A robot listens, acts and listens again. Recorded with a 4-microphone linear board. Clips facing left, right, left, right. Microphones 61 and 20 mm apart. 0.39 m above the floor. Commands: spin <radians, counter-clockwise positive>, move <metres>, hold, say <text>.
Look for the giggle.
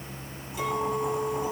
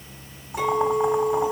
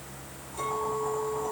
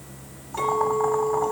hold
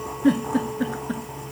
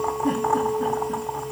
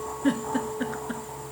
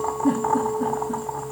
spin 1.57
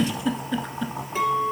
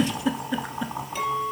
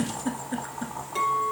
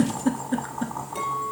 spin -0.17
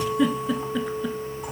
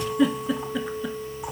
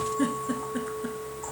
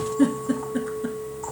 say Facing the giggle, 1 to 2 m away.